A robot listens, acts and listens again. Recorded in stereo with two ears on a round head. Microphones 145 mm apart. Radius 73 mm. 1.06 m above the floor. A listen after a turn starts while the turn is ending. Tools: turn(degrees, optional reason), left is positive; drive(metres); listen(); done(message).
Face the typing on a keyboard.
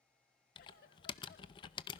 turn(degrees=30, reason="The typing on a keyboard: about 30° left or 150° left.")
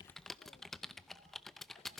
done("Found it: typing on a keyboard, straight ahead, under 1 m away.")